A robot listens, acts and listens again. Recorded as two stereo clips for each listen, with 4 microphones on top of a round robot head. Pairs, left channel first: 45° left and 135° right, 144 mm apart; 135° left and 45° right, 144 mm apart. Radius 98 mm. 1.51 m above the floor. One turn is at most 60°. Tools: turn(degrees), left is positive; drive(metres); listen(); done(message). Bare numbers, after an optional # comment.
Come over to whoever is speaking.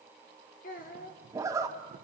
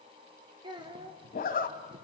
# The child speaking: 15° left.
turn(15)
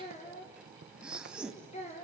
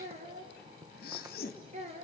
drive(1.0)
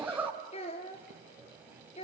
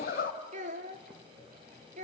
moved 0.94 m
drive(1.0)
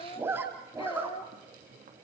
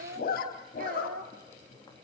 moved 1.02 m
# The child speaking is now 10° right.
turn(-10)
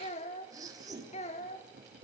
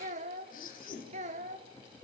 drive(1.0)
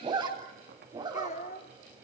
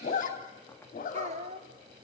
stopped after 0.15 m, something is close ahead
done("I am next to the child speaking.")